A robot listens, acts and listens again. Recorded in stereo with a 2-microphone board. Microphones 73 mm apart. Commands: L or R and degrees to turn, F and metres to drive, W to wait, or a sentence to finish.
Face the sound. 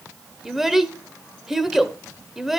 R30
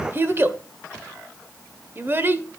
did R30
R145
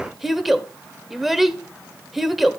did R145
Found it: a child speaking, straight ahead, 1 to 2 m away.